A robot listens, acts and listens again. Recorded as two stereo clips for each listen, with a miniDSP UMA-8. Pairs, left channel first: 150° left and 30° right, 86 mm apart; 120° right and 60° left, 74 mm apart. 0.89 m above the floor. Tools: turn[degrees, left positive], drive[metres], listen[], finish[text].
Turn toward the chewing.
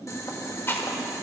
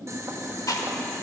Thought: The chewing: 150° right.
Action: turn[-150]
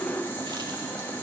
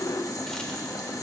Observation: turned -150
Action: listen[]
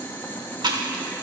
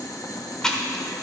Thought: The chewing is now 40° right.
Action: turn[-40]
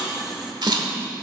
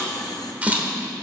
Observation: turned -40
Thought: The chewing is now 10° right.
Action: turn[-10]
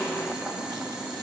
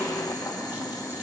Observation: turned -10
Action: listen[]
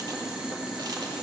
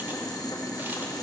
Action: listen[]
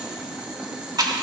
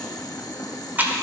Action: finish[Found it: chewing, straight ahead.]